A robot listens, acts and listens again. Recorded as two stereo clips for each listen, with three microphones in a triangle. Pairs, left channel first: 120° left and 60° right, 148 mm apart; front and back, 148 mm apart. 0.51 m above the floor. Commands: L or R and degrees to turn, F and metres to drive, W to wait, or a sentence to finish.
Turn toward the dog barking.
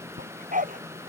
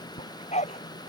R40
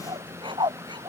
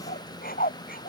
Facing the dog barking.